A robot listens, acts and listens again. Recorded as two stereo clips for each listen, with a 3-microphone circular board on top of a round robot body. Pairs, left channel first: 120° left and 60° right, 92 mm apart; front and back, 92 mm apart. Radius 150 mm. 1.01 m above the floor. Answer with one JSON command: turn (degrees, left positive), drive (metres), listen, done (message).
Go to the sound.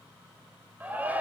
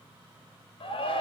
{"turn": 10}
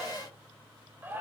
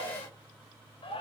{"drive": 1.0}
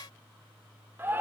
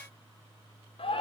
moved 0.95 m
{"drive": 1.0}
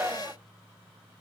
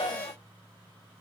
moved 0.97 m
{"drive": 1.0}
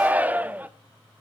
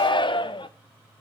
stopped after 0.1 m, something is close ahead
{"turn": 10}
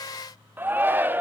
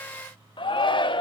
{"done": "Arrived at the shout, straight ahead."}